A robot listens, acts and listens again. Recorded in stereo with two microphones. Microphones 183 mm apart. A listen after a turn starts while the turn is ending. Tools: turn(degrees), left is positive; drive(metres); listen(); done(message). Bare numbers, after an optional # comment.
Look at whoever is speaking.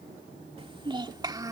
# The child speaking: about 20° right or 160° right.
turn(-20)
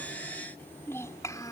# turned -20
# So it is at 20° left.
turn(20)
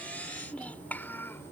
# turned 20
# The child speaking is now 10° left.
turn(10)
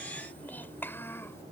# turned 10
# The child speaking is now 15° left.
turn(15)
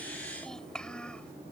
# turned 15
done("Found it: a child speaking, straight ahead.")